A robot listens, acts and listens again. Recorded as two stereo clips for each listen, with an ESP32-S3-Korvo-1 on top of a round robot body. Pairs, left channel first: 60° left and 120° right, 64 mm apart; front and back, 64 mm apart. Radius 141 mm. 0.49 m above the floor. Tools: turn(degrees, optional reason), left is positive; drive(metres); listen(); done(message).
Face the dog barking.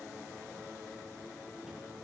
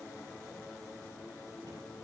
listen()
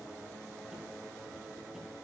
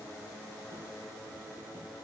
listen()
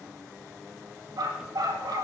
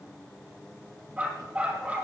turn(degrees=-115, reason="The dog barking: 115° right.")
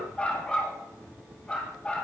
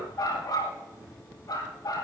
turn(degrees=-15, reason="The dog barking is now 15° right.")
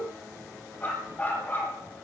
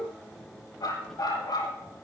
done("Facing the dog barking.")